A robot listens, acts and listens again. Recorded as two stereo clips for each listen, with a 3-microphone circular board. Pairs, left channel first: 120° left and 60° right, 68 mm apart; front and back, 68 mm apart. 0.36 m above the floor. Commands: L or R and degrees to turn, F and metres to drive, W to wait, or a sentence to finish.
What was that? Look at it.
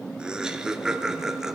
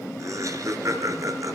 R145
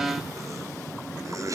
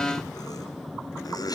R20
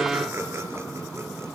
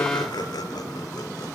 W
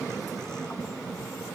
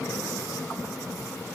W
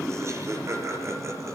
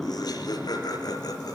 R15
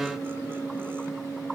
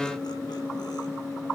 W
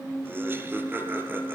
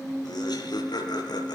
Found it: laughter, straight ahead, over 4 m away.